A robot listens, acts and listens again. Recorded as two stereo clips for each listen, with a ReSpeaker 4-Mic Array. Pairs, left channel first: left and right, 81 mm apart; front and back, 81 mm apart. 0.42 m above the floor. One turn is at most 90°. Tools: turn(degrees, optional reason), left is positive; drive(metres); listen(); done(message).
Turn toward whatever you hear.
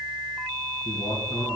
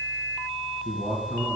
turn(degrees=90, reason="The man speaking: 120° left.")
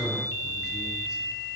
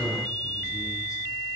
turn(degrees=45, reason="The man speaking is now 45° left.")
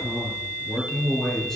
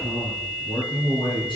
done("Facing the man speaking, over 4 m away.")